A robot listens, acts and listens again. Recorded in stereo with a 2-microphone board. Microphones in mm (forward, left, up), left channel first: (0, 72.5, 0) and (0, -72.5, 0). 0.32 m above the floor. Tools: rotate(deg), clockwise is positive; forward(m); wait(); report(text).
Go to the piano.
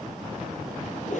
wait()
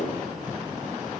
wait()
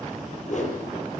report("I can't make out a piano, only a whoosh.")